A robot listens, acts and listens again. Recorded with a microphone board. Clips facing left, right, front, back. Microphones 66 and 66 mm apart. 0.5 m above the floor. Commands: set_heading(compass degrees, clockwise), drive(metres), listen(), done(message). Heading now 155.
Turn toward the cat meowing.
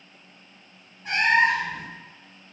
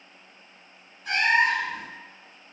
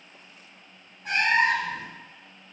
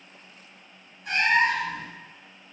set_heading(115)
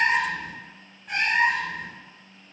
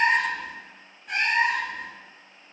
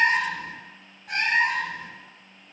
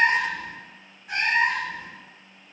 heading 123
done("Found it: a cat meowing, straight ahead, 1 to 2 m away.")